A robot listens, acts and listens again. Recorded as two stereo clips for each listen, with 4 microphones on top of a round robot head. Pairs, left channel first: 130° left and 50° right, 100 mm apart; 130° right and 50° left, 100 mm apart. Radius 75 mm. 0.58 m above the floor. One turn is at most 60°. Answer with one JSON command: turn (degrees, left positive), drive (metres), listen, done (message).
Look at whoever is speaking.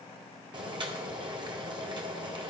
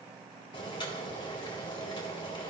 {"listen": true}
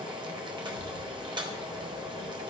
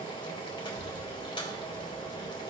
{"turn": 60}
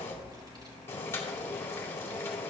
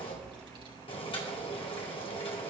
{"done": "Facing the child speaking."}